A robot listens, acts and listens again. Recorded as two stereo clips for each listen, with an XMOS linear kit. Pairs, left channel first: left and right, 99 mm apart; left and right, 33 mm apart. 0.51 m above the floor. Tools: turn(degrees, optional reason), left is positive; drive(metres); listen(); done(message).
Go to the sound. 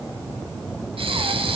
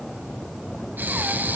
turn(degrees=-70, reason="The breathing: about 70° right or 110° right.")
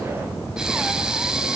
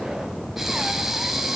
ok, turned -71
drive(metres=1.0)
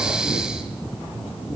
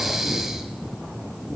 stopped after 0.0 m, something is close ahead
done("Blocked. The breathing is further on, straight ahead.")